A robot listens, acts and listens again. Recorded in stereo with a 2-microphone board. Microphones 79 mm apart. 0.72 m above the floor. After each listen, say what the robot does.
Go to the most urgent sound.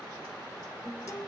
Keep listening.
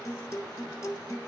Keep listening.
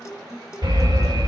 Turn 55° right.
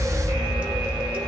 Turn 70° right.
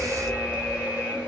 Turn 15° right.
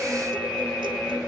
Drive 1.0 m forward.
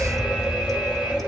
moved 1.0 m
Turn 10° right.
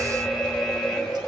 Drive 1.0 m forward.
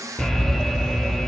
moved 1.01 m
Drive 1.0 m forward.
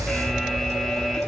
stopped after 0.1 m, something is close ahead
I am next to the alarm.